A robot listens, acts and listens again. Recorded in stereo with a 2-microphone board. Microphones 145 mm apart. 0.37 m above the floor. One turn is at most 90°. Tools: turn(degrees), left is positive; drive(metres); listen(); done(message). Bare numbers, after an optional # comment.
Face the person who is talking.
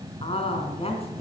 # The woman speaking: about 40° left or 140° left.
turn(40)
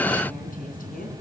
listen()
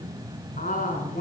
# So it is at 95° left.
turn(90)
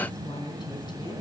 # The woman speaking is now 35° left.
turn(35)
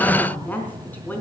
# The woman speaking is now 15° left.
turn(15)
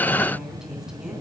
done("Facing the woman speaking.")